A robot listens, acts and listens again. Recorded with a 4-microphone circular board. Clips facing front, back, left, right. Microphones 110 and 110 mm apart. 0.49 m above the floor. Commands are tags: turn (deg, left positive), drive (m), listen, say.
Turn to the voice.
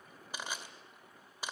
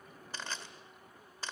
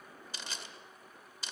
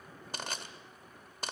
<listen/>
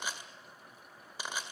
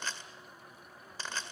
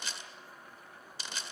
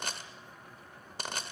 <listen/>
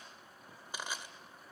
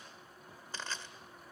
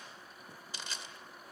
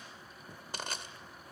<say>I can't make out anyone speaking, only crushing.</say>